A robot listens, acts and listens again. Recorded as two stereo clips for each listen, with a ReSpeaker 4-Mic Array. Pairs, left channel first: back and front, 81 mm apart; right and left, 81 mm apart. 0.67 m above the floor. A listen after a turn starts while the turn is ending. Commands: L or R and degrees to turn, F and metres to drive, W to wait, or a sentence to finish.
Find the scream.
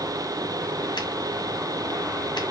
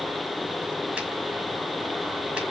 W
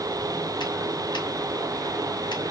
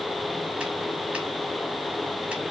W
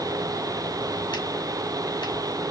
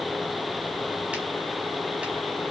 I can't make out a scream.